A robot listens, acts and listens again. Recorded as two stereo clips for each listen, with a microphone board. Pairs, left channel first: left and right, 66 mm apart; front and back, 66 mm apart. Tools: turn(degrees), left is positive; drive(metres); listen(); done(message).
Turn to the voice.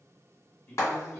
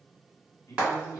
turn(degrees=35)
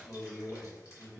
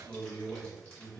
done("Found it: a man speaking, straight ahead, 1 to 2 m away.")